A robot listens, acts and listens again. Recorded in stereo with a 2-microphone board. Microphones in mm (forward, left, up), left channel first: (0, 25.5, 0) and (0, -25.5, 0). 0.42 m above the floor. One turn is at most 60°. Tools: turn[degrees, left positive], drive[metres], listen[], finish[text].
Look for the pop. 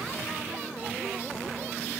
Action: listen[]
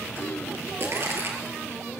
Thought: The pop: about 50° right or 130° right.
Action: turn[-50]
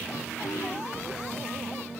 Action: listen[]
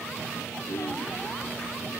Action: finish[I heard a pop, but can't make it out now. It was about straight ahead or 80° right.]